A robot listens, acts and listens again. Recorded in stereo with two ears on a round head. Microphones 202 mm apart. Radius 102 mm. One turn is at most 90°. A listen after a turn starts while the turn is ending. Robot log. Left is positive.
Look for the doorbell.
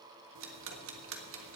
cmd idle
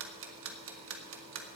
cmd idle
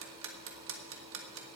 end: I can't make out a doorbell to turn to.